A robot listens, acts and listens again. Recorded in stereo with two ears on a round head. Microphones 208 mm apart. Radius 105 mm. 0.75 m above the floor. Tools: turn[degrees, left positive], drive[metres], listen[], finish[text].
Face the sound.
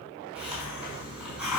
Action: turn[-30]
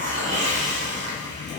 Thought: So it is at 145° right.
Action: turn[-145]
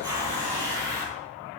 Thought: The hiss is now 15° right.
Action: turn[-15]
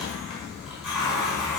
Action: finish[Found it: a hiss, straight ahead, over 4 m away.]